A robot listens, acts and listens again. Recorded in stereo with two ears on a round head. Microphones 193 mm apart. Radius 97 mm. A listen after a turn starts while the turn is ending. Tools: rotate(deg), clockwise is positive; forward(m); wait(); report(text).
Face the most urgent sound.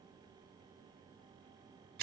wait()
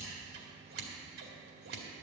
wait()
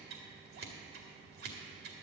report("I can't make out anything urgent to turn to.")